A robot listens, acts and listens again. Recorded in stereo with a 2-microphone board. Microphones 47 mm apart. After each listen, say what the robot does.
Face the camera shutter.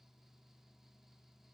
Keep listening.
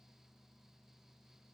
Keep listening.
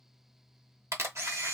Turn 75° right.
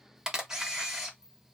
Turn 15° right.
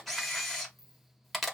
Found it: a camera shutter, straight ahead.